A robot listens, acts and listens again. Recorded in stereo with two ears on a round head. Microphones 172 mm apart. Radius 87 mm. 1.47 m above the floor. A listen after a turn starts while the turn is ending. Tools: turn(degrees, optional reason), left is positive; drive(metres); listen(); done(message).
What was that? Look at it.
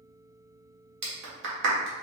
turn(degrees=-65, reason="The clap: about 65° right or 115° right.")
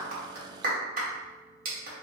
turn(degrees=-50, reason="So it is at 50° right.")
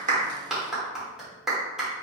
done("Found it: a clap, straight ahead, 1 to 2 m away.")